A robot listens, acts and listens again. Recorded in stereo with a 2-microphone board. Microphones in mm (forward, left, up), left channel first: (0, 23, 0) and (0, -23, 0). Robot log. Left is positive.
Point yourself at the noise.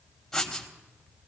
cmd yaw +30
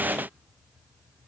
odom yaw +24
cmd idle
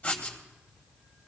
note: So it is at 145° left.
cmd yaw +145
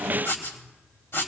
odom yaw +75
note: The writing is now 75° left.
cmd yaw +75
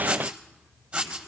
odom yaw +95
note: The writing is now 20° right.
cmd yaw -20
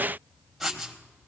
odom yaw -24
end: Facing the writing.